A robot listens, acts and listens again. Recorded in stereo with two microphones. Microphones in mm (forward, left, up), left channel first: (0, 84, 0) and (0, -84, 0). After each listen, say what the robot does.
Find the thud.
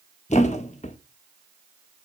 Turn 45° left.
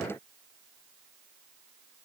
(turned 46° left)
Keep listening.
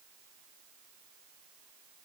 I heard a thud, but can't make it out now. It was about 5° right or 90° left.